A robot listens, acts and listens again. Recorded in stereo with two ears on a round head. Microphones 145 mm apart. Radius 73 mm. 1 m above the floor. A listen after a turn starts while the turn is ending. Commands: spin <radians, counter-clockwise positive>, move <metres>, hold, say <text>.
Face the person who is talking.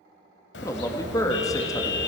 spin 0.35
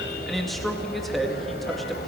say Found it: a man speaking, straight ahead.